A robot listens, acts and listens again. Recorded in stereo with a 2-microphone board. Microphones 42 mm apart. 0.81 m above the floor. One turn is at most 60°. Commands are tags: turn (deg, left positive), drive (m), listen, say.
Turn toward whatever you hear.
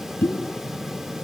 <turn deg="60"/>
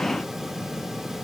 <listen/>
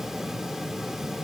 <say>I heard a pop, but can't make it out now. It was about 15° left or 45° left.</say>